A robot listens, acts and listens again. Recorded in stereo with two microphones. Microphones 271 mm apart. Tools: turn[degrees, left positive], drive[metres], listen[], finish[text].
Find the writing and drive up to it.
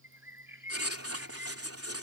Thought: The writing: about 60° right or 120° right.
Action: turn[-60]
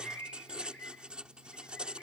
Action: drive[1.0]
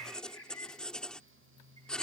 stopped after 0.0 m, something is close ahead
Action: finish[Something is in my way. I am facing the writing but have not reached it.]